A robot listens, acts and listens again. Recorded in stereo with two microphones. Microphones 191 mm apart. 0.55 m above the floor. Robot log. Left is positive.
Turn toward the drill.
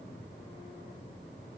cmd idle
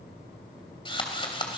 note: The drill: about 25° left or 155° left.
cmd yaw +25
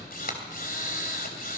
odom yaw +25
note: So it is at 125° left.
cmd yaw +125
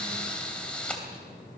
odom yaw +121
end: Facing the drill.